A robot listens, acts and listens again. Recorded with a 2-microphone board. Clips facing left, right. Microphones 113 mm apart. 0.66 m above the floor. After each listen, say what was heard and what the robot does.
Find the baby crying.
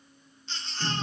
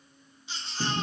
Turn 30° right.
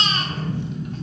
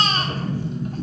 So it is at 140° right. Turn 140° right.
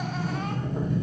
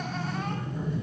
Keep listening.
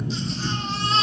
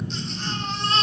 Facing the baby crying.